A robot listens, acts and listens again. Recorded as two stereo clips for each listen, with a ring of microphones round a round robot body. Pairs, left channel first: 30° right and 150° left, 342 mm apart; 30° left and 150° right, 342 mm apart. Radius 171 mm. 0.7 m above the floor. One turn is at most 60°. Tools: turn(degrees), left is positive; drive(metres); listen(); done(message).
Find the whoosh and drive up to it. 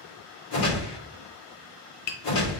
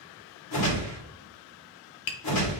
turn(degrees=-10)
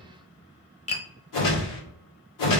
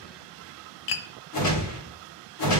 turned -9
drive(metres=1.0)
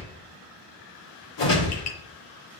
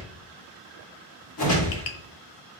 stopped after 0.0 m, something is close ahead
done("Blocked. The whoosh is further on, straight ahead.")